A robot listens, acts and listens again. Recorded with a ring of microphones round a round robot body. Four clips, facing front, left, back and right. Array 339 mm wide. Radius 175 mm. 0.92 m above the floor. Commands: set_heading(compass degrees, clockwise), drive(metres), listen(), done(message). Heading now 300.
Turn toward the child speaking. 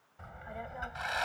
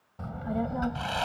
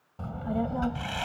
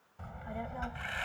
set_heading(155)
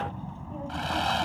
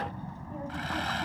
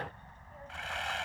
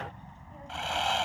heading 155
set_heading(120)
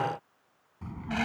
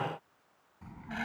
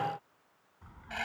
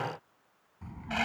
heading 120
done("Found it: a child speaking, straight ahead.")